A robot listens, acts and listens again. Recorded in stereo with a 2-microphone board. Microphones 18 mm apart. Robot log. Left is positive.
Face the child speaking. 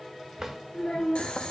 note: The child speaking: about 45° left or 135° left.
cmd yaw +45
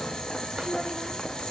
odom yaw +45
cmd idle
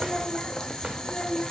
note: The child speaking: about 35° left or 145° left.
cmd yaw +35
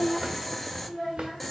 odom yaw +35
note: So it is at 20° left.
cmd yaw +20
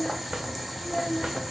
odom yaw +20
note: The child speaking is now 10° left.
cmd yaw +10
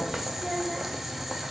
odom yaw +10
end: Found it: a child speaking, straight ahead, 1 to 2 m away.